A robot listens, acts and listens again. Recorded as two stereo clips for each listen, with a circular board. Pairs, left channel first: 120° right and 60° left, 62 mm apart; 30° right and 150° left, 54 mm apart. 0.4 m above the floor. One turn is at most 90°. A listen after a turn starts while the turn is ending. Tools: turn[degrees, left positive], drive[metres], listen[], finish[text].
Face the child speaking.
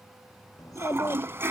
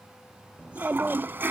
Thought: The child speaking: 140° right.
Action: turn[-90]
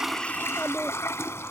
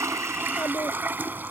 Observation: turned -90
Thought: The child speaking is now 50° right.
Action: turn[-50]
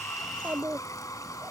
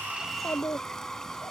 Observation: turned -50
Action: finish[Facing the child speaking.]